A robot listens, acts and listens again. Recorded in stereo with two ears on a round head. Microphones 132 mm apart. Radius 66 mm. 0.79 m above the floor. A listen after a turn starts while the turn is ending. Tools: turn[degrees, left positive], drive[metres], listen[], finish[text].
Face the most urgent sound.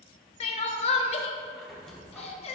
Thought: The crying: about 40° left or 140° left.
Action: turn[40]
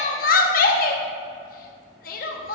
Thought: So it is at 95° left.
Action: turn[95]
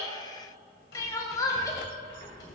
Thought: The crying is now 25° left.
Action: turn[25]
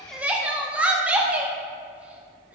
Thought: The crying is now 10° right.
Action: turn[-10]
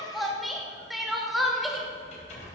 Action: finish[Found it: crying, straight ahead, under 1 m away.]